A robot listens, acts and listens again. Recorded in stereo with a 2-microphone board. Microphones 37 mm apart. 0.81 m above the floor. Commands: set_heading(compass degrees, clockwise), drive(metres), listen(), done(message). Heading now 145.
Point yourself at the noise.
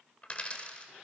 set_heading(110)
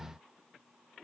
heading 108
listen()
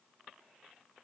done("I heard a dropped coin, but can't make it out now. It was about 5° right or 110° left.")